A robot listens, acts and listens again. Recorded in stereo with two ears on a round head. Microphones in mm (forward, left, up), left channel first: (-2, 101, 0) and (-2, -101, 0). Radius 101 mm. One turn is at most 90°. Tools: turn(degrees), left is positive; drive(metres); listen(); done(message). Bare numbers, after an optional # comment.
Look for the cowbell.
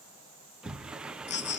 listen()
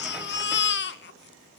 listen()
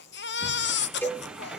turn(30)
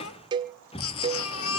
# So it is at 20° right.
turn(-20)
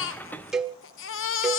done("Found it: a cowbell, straight ahead.")